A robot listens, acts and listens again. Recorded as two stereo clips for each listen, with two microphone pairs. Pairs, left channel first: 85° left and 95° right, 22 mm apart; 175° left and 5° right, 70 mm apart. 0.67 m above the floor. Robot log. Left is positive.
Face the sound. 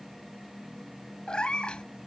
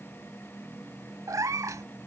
note: The cat meowing: 35° left.
cmd yaw +35
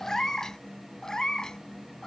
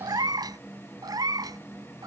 note: The cat meowing is now 20° left.
cmd yaw +20
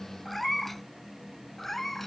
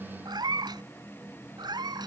end: Found it: a cat meowing, straight ahead.